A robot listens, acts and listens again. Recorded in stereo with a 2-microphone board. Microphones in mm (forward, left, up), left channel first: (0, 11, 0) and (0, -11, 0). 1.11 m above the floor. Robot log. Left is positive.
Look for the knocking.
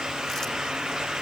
cmd idle
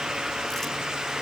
cmd idle
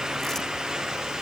end: I can't make out knocking to turn to.